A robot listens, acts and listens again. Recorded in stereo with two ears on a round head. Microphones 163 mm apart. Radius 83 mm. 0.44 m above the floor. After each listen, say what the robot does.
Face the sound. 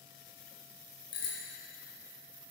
Turn 25° left.
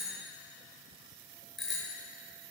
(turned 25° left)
Facing the bicycle bell, over 4 m away.